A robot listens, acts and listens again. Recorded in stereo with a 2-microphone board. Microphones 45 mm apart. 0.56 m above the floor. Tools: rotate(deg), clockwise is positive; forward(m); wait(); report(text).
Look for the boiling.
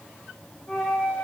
wait()
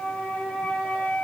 wait()
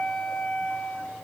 report("I can't make out boiling to turn to.")